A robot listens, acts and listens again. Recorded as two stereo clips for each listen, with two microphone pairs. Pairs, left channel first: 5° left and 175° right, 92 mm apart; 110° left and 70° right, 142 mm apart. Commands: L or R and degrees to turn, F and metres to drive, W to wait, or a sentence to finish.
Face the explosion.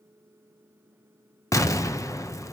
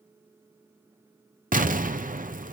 R50
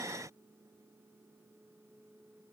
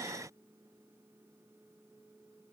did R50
Facing where the explosion came from. I can't hear it now.